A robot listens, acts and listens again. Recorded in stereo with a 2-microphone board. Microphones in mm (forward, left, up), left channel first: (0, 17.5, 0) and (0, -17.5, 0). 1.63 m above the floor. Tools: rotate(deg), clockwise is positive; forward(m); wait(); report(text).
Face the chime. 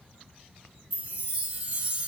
rotate(40)
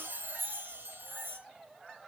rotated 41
rotate(100)
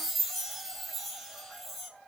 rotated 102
report("Facing the chime.")